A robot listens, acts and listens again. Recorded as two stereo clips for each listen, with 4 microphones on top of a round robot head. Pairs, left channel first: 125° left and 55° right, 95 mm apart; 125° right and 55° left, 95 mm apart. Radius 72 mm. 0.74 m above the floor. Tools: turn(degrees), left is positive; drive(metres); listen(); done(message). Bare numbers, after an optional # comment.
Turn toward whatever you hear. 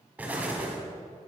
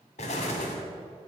# The explosion: 130° right.
turn(-130)
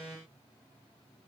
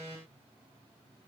done("Facing where the explosion came from. I can't hear it now.")